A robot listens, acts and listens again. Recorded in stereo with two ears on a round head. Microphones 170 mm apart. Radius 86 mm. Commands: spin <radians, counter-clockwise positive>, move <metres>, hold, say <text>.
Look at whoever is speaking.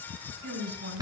spin -0.96
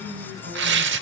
spin -1.05
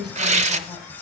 say Facing the woman speaking, 2 to 4 m away.